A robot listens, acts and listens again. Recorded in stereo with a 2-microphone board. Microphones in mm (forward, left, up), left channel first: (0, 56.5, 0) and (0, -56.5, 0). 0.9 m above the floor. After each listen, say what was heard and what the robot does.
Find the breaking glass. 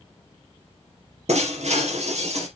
Turn 90° right.
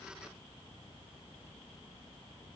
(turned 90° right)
Facing where the breaking glass came from. I can't hear it now.